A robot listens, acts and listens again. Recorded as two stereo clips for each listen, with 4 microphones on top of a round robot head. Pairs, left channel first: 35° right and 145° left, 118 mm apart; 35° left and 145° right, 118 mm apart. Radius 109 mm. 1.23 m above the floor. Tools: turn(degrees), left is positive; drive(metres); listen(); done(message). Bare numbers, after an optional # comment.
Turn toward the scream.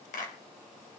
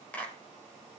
listen()
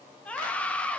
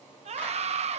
# The scream: 115° right.
turn(-115)
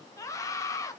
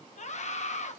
# The scream is now 25° left.
turn(25)
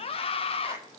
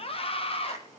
done("Facing the scream.")